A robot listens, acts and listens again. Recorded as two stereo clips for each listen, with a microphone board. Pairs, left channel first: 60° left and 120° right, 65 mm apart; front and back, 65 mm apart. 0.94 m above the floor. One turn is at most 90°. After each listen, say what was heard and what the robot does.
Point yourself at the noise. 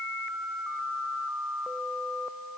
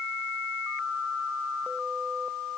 Keep listening.
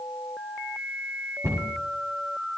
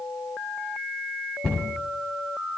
The cupboard door: 80° right. Turn 80° right.
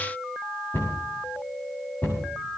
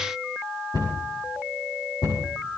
Found it: a cupboard door, straight ahead, over 4 m away.